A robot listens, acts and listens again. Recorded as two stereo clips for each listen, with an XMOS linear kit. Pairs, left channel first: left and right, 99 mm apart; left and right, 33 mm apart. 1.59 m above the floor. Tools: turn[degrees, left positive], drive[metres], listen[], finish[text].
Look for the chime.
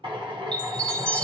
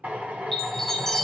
Action: turn[30]
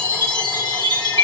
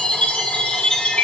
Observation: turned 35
Thought: So it is at 135° left.
Action: turn[135]
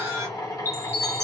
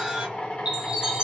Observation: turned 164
Thought: The chime is now 30° right.
Action: turn[-30]
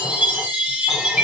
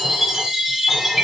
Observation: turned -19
Thought: The chime is now 10° right.
Action: turn[-10]
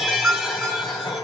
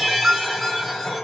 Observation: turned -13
Action: finish[Found it: a chime, straight ahead.]